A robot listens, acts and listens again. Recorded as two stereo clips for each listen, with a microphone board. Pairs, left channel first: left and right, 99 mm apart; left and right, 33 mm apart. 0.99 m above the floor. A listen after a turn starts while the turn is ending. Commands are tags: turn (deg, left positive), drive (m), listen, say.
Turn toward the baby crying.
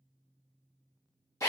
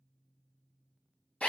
<listen/>
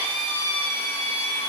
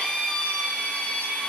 <listen/>
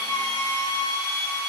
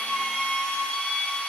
<say>I can't make out a baby crying to turn to.</say>